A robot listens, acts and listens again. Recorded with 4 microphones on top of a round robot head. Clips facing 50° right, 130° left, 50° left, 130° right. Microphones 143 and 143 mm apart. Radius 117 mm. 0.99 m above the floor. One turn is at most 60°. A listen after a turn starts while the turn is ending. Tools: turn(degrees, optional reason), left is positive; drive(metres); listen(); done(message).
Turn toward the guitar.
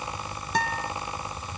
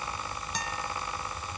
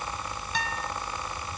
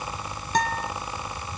turn(degrees=-60, reason="The guitar: 85° right.")
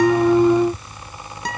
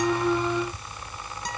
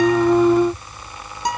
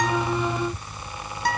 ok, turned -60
turn(degrees=-25, reason="The guitar is now 25° right.")
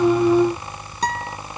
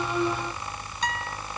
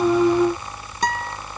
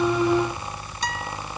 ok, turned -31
done("Found it: a guitar, straight ahead.")